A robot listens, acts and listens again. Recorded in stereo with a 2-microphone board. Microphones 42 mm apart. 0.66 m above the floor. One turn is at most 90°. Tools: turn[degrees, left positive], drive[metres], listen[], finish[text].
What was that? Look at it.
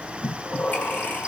Thought: The breathing: about 50° left or 130° left.
Action: turn[50]
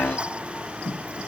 Thought: So it is at 80° left.
Action: turn[80]
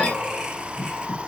Thought: The breathing is now 20° right.
Action: turn[-20]
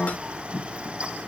Thought: The breathing is now 10° right.
Action: turn[-10]
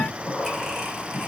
Action: finish[Found it: breathing, straight ahead, 1 to 2 m away.]